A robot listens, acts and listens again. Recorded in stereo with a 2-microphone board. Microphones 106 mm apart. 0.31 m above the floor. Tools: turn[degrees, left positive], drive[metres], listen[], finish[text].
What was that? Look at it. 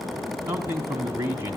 Thought: The man speaking: about 25° right or 155° right.
Action: turn[-25]
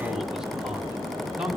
Action: finish[Found it: a man speaking, straight ahead.]